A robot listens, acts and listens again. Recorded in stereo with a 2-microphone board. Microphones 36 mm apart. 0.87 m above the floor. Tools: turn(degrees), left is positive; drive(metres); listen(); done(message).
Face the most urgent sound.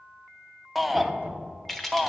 turn(degrees=30)
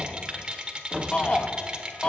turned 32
turn(degrees=150)
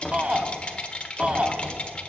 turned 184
turn(degrees=-35)
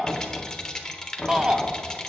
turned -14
turn(degrees=-20)
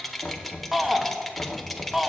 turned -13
done("Found it: a shout, straight ahead.")